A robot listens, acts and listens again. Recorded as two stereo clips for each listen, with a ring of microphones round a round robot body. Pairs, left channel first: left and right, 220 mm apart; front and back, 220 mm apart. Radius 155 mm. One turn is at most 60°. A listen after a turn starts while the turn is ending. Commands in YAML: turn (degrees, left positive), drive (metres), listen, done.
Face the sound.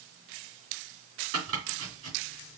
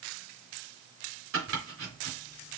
turn: -60
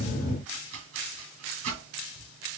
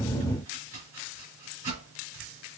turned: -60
turn: -60
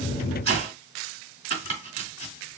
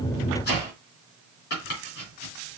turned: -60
turn: -55
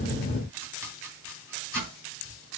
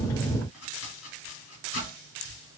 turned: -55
turn: -10
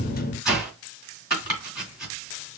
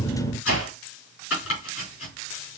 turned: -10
done: "Found it: chopping, straight ahead."